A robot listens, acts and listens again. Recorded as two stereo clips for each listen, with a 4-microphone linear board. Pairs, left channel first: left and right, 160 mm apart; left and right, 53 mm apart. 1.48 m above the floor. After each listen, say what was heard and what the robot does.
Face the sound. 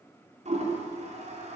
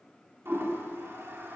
The toilet flushing: about 45° right or 135° right. Turn 45° right.
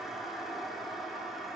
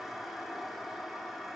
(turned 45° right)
Facing the toilet flushing, over 4 m away.